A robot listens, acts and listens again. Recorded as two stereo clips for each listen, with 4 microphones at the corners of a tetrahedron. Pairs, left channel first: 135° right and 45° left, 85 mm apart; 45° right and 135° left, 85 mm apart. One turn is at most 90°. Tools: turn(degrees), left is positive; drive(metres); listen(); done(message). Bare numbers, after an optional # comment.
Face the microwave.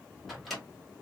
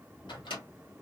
# The microwave: 45° right.
turn(-45)
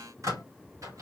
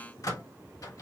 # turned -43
done("Found it: a microwave, straight ahead.")